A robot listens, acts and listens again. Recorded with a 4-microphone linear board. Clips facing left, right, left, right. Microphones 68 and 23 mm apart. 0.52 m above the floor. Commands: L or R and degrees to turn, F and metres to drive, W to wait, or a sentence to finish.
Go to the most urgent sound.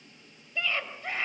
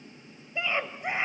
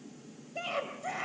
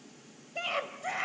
R20
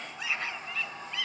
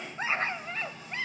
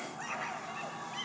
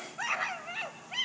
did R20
R140
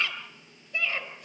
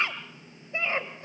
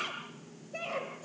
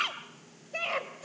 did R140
R30
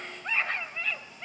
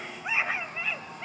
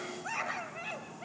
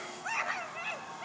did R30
R10
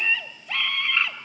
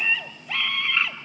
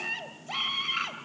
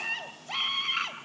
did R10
F1.0
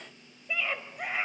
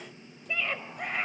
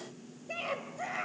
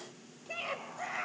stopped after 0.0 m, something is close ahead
Something is in my way. I am facing the scream but have not reached it.